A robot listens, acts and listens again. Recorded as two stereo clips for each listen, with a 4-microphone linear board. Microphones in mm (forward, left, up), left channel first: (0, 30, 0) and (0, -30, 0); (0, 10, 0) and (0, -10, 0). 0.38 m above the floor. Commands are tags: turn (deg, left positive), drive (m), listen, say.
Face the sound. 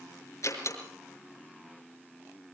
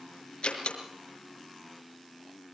<turn deg="55"/>
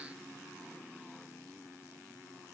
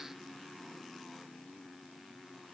<listen/>
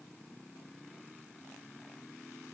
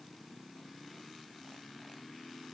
<say>I heard a door slam, but can't make it out now. It was about straight ahead or 70° left.</say>